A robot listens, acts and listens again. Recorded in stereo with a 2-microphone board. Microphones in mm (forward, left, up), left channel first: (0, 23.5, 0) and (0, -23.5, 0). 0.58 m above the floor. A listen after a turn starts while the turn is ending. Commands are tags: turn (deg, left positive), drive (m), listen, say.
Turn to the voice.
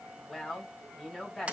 <turn deg="30"/>
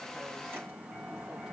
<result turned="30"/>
<listen/>
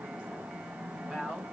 <turn deg="-20"/>
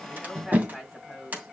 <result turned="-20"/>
<say>Facing the woman speaking, over 4 m away.</say>